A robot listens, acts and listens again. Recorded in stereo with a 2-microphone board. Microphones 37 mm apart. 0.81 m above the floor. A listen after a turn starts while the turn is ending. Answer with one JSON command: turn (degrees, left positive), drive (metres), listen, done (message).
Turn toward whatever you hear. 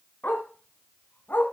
{"turn": 70}
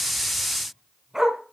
{"turn": -15}
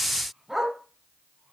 {"turn": -10}
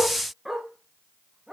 {"turn": -15}
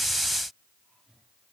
{"listen": true}
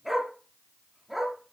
{"done": "Found it: a dog barking, straight ahead, 2 to 4 m away."}